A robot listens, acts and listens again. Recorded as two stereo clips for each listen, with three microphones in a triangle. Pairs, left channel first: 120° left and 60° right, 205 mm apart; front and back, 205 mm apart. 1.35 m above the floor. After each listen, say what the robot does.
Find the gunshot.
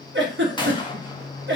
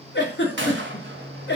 Turn 175° right.
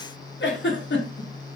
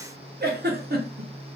I heard a gunshot from this way, but can't make it out now.